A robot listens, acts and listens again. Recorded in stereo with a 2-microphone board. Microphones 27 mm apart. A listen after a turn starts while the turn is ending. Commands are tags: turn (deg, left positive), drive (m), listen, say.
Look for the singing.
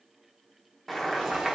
<listen/>
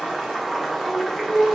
<turn deg="90"/>
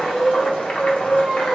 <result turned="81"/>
<turn deg="20"/>
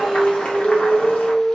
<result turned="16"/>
<say>Found it: singing, straight ahead, 1 to 2 m away.</say>